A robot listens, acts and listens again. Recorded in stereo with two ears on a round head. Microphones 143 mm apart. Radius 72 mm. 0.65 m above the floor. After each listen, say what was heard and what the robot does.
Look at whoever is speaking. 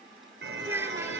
The child speaking: about 15° right or 165° right. Turn 15° right.
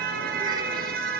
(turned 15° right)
Keep listening.
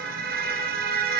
Keep listening.
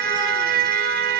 I heard a child speaking, but can't make it out now. It was about straight ahead or 150° right.